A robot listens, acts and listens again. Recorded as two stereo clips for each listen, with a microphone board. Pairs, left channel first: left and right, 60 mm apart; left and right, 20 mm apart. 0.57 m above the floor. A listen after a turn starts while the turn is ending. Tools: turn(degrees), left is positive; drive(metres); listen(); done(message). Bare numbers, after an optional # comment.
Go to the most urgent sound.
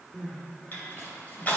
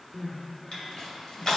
# The crying: about 40° left or 140° left.
turn(40)
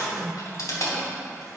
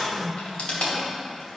drive(1.0)
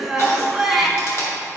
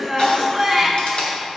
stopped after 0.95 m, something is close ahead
done("I am next to the crying.")